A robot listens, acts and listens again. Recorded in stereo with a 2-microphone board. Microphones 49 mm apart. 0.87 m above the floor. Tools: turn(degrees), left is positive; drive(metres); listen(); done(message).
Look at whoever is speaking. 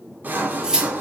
listen()
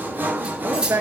turn(degrees=-65)
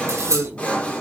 turn(degrees=-45)
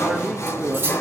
done("Facing the man speaking, 1 to 2 m away.")